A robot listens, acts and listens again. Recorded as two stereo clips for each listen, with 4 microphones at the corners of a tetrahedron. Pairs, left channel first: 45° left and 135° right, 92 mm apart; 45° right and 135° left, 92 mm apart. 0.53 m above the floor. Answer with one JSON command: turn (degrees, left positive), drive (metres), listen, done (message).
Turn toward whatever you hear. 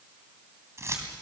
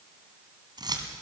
{"turn": 170}
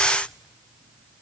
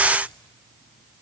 {"listen": true}
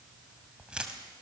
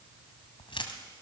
{"turn": -55}
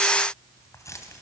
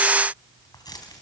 {"done": "Facing the keys jangling."}